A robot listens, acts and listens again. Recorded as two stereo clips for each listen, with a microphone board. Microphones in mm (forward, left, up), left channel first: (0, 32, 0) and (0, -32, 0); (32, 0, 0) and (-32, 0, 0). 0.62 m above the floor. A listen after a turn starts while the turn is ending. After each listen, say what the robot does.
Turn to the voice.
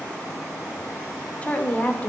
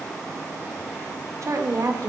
Turn 155° left.
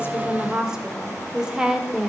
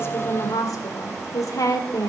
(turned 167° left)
Turn 10° right.
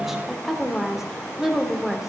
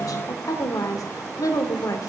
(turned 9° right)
Facing the woman speaking.